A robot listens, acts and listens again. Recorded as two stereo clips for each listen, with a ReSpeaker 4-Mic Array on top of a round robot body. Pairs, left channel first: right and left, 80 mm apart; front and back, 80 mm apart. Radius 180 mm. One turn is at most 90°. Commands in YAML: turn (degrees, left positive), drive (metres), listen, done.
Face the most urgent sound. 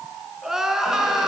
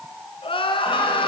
done: "Found it: crying, straight ahead."